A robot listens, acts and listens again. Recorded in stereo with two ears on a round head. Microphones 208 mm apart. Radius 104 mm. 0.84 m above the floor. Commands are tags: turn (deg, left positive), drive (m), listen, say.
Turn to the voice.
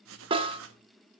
<listen/>
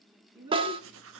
<turn deg="-20"/>
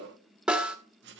<turn deg="-140"/>
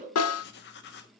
<turn deg="-25"/>
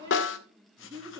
<turn deg="-15"/>
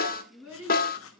<say>Found it: a child speaking, straight ahead.</say>